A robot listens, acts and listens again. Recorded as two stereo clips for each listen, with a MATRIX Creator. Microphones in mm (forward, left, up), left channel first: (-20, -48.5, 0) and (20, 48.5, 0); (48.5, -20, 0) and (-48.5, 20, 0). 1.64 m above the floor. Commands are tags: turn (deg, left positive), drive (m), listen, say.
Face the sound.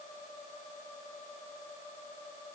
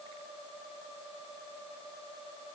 <listen/>
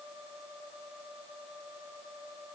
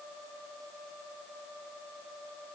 <listen/>
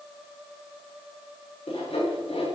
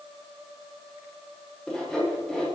<turn deg="-105"/>
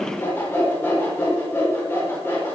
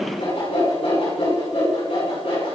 <turn deg="-45"/>
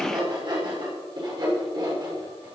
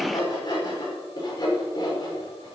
<turn deg="25"/>
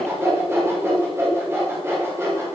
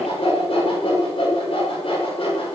<say>Facing the sawing.</say>